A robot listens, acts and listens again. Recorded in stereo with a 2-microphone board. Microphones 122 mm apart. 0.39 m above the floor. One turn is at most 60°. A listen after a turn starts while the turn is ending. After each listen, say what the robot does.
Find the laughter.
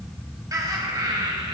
Turn 40° right.
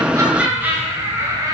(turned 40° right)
Turn 30° right.
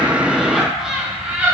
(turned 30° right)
Turn 10° right.
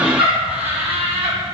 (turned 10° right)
Turn 20° right.
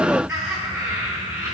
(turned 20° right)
Turn 15° right.
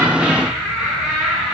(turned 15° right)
Found it: laughter, straight ahead.